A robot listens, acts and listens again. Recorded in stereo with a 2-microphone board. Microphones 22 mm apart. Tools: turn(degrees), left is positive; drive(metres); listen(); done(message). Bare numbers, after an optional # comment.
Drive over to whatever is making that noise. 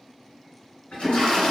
# The toilet flushing: about 60° left or 120° left.
turn(60)
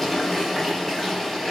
# So it is at 15° left.
turn(15)
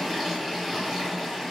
drive(1.0)
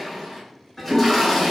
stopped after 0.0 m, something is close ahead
done("Blocked. The toilet flushing is further on, straight ahead.")